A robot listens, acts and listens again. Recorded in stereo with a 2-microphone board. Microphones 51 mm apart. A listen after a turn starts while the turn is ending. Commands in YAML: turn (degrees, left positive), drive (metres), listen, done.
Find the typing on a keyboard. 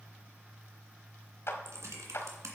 turn: -70
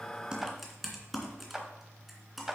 done: "Found it: typing on a keyboard, straight ahead."